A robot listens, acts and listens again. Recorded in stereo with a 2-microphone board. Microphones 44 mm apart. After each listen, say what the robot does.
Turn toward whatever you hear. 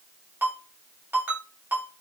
Turn 55° right.
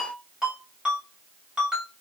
Turn 20° right.
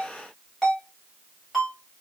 Found it: a ringtone, straight ahead, 1 to 2 m away.